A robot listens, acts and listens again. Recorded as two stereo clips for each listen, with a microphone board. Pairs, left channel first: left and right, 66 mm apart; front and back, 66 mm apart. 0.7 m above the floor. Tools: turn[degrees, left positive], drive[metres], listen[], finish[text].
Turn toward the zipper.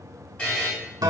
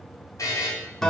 Action: listen[]
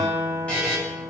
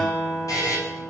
Action: listen[]
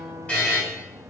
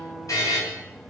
Action: finish[I can't make out a zipper, only a buzzer and a guitar.]